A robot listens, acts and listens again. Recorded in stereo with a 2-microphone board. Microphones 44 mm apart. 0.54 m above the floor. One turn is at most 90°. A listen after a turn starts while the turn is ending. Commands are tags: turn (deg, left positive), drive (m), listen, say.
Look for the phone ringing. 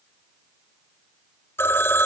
<turn deg="75"/>
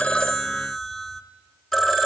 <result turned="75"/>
<say>Found it: a phone ringing, straight ahead.</say>